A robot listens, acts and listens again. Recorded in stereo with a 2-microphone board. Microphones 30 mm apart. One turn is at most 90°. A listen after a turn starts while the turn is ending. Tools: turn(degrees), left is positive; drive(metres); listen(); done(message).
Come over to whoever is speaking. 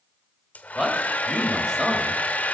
turn(degrees=-15)
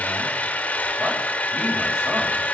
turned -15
listen()
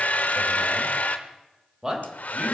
turn(degrees=-90)
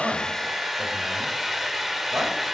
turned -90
turn(degrees=-60)
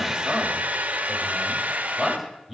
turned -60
drive(metres=1.0)
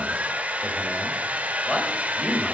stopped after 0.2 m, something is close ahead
turn(degrees=10)
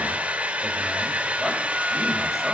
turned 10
listen()
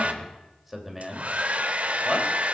done("Blocked. The man speaking is further on, straight ahead.")